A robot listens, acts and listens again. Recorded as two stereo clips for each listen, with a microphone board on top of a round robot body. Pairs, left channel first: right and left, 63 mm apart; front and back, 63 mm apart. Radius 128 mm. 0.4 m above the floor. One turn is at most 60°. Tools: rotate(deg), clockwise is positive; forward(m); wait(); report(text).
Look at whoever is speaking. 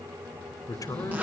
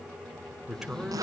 rotate(60)
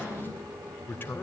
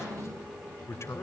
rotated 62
rotate(35)
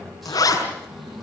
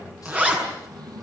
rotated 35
wait()
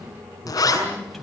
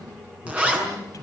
wait()
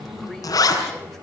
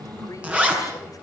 report("Facing where the man speaking came from. I can't hear it now.")